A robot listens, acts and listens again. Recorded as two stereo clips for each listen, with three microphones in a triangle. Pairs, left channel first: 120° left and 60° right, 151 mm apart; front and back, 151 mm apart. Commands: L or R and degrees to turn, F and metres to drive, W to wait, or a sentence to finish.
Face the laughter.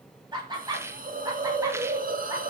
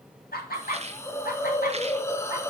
Facing the laughter, 2 to 4 m away.